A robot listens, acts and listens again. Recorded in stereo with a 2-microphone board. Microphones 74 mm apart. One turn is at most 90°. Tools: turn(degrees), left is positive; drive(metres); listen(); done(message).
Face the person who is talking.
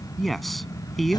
turn(degrees=30)
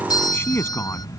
turn(degrees=90)
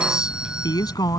turn(degrees=70)
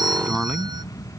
done("Found it: a man speaking, straight ahead.")